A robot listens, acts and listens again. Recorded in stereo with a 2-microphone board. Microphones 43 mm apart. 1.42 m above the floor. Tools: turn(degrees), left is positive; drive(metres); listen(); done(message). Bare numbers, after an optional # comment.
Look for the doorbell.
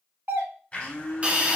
# The doorbell: about 65° right or 115° right.
turn(-65)
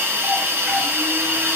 listen()
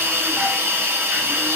listen()
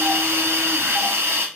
done("I heard a doorbell, but can't make it out now. It was about straight ahead or 50° right.")